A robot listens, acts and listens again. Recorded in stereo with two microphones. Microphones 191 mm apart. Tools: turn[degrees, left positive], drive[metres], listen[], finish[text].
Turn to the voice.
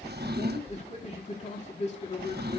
Thought: The man speaking: about 35° left or 145° left.
Action: turn[35]
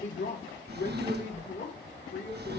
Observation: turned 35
Thought: So it is at 110° left.
Action: turn[110]
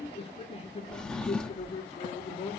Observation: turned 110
Thought: The man speaking is now 30° left.
Action: turn[30]
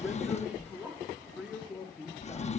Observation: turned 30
Action: finish[Found it: a man speaking, straight ahead, 2 to 4 m away.]